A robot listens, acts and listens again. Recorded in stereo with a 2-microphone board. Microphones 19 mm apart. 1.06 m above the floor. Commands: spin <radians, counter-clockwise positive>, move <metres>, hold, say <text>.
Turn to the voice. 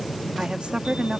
spin -1.22
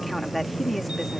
say Facing the woman speaking.